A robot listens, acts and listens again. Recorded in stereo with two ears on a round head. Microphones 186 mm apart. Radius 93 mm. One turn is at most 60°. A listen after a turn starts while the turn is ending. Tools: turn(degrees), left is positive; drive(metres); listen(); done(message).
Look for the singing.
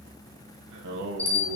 turn(degrees=-55)
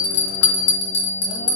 listen()
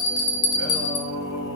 turn(degrees=60)
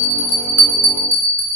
listen()
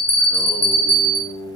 turn(degrees=15)
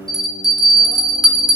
listen()
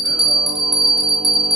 listen()
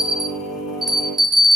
done("Found it: singing, straight ahead, 2 to 4 m away.")